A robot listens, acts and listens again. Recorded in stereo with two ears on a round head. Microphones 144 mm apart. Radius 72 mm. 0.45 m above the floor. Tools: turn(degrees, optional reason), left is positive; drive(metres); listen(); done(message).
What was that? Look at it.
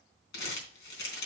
turn(degrees=70, reason="The crumpling: about 70° left or 110° left.")
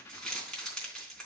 done("Facing the crumpling.")